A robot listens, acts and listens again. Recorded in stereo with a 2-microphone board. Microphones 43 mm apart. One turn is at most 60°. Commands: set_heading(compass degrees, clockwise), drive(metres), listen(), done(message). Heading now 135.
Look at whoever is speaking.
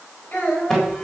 set_heading(90)
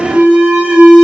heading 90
listen()
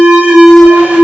listen()
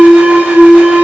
done("I heard a child speaking, but can't make it out now. It was about straight ahead or 90° left.")